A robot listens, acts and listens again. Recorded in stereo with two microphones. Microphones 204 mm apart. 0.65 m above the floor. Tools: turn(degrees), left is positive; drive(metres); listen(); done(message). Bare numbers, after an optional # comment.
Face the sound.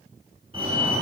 # The fire alarm: about 25° right or 155° right.
turn(-25)
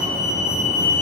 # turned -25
# So it is at 125° right.
turn(-125)
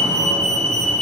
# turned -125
done("Found it: a fire alarm, straight ahead, 2 to 4 m away.")